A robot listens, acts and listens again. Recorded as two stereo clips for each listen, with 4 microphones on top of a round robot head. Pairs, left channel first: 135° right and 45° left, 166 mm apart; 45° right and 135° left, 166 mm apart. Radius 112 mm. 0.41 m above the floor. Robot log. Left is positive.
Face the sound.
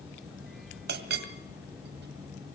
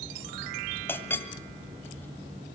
note: The clink: 30° left.
cmd yaw +30
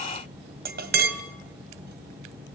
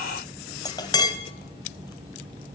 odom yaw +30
note: The clink is now 20° left.
cmd yaw +20
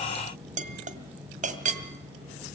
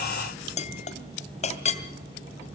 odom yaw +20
end: Found it: a clink, straight ahead.